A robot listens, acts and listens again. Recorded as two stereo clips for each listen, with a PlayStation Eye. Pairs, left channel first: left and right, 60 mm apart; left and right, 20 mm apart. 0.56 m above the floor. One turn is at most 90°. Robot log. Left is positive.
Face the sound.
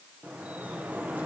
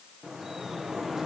note: The dripping: about 20° right or 160° right.
cmd yaw -20
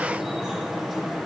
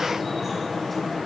end: Facing the dripping.